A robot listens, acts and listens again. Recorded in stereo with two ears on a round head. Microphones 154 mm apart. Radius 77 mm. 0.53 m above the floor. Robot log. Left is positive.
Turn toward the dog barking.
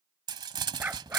cmd yaw -30
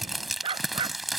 note: So it is at 150° right.
cmd yaw -150
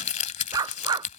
note: The dog barking is now 25° right.
cmd yaw -25
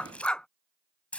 end: Facing the dog barking.